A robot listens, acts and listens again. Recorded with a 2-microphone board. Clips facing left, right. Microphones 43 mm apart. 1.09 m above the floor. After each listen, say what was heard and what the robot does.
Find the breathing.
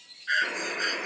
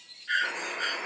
The breathing: about 70° left or 110° left. Turn 70° left.
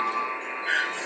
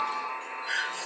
So it is at 40° left. Turn 40° left.
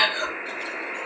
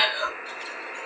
The breathing is now 15° right. Turn 15° right.
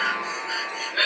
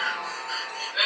Facing the breathing.